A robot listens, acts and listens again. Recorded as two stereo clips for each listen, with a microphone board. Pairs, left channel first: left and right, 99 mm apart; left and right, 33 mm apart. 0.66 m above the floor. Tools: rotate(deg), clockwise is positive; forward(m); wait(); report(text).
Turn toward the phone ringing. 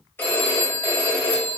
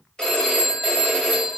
rotate(-20)
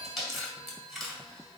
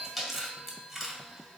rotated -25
wait()
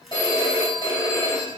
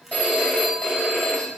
rotate(-135)
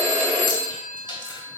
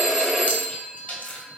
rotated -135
report("Facing the phone ringing.")